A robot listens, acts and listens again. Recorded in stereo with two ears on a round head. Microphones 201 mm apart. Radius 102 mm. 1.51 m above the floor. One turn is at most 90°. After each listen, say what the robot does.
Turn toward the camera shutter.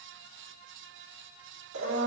Keep listening.
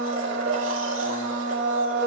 Keep listening.
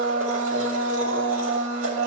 I can't make out a camera shutter, only a blender.